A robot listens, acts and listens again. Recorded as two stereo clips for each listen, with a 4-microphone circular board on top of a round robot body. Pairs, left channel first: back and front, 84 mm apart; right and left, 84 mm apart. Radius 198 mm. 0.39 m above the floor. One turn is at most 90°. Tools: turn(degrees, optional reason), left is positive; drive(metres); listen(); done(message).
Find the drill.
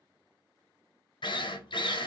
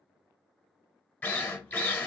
turn(degrees=-90, reason="The drill: 160° right.")
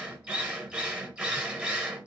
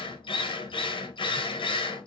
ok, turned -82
turn(degrees=-75, reason="The drill is now 75° right.")
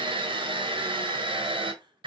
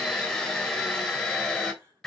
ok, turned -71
done("Found it: a drill, straight ahead.")